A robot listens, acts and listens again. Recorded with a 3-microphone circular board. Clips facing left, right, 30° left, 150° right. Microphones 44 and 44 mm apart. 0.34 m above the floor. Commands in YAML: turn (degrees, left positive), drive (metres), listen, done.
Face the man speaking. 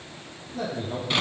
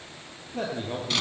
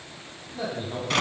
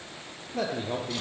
turn: -135
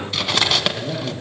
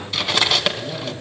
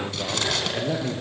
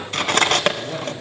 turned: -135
turn: 35
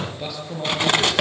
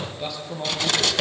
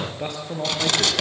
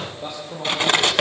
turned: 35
done: "Facing the man speaking, over 4 m away."